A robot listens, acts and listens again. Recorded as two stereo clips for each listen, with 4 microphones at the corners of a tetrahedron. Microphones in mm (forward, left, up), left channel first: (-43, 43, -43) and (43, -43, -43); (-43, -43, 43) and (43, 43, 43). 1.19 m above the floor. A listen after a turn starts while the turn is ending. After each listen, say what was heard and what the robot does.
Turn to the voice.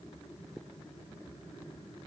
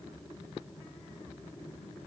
Keep listening.
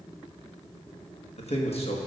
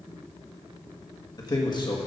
The man speaking: 175° left. Turn 175° left.
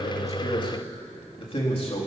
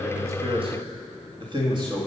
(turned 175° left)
The man speaking is now 100° left. Turn 100° left.
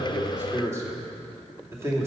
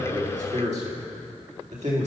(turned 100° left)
The man speaking is now 25° left. Turn 25° left.
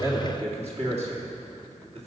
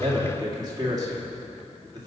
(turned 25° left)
The man speaking is now 10° right. Turn 10° right.
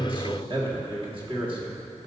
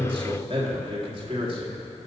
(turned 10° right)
Facing the man speaking.